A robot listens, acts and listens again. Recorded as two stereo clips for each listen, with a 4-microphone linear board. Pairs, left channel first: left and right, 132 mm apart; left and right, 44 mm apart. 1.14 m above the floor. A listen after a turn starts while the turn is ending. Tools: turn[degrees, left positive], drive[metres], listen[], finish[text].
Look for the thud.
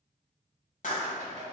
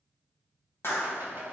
Action: listen[]
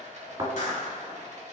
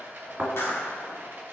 Thought: The thud: about 40° right or 140° right.
Action: turn[-40]
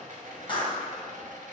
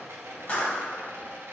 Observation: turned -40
Action: listen[]
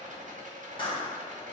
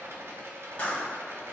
Action: finish[I heard a thud, but can't make it out now. It was about straight ahead or 100° right.]